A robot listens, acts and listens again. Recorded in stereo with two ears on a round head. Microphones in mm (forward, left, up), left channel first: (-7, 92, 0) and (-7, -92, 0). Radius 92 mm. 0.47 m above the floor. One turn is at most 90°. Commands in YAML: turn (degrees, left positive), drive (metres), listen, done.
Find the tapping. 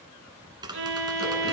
turn: -20
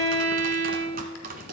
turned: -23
turn: -90
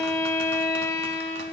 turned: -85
turn: -50
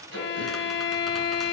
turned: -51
listen: true
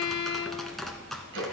done: "Found it: tapping, straight ahead."